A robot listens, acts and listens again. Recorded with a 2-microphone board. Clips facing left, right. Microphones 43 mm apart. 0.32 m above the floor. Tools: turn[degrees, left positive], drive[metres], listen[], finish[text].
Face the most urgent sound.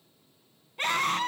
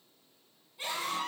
Thought: The scream: about 55° left or 125° left.
Action: turn[55]
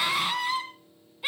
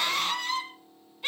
Thought: So it is at 10° left.
Action: turn[10]
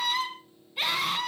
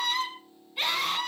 Action: finish[Found it: a scream, straight ahead.]